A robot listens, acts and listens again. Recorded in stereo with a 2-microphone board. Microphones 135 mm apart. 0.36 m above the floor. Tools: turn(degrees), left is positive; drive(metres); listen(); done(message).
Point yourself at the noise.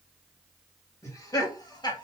turn(degrees=30)
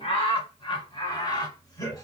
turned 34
turn(degrees=25)
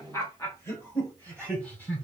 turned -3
turn(degrees=30)
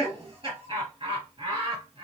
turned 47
turn(degrees=-40)
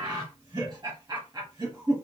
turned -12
turn(degrees=-30)
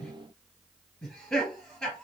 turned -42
turn(degrees=10)
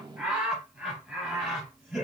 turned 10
done("Facing the laughter.")